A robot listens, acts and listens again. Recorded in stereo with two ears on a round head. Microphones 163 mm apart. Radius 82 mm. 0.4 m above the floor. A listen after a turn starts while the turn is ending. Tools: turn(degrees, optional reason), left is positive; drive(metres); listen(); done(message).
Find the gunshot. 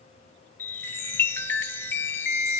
listen()
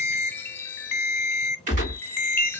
turn(degrees=-45, reason="The gunshot: about 45° right or 135° right.")
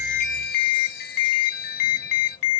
listen()
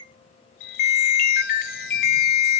done("I heard a gunshot, but can't make it out now. It was about straight ahead or 90° right.")